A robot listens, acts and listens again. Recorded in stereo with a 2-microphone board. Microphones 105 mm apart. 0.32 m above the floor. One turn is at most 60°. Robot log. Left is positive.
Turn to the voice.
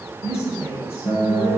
note: The woman speaking: about 25° left or 155° left.
cmd yaw +25
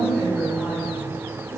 cmd idle
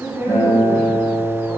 end: Found it: a woman speaking, straight ahead, 1 to 2 m away.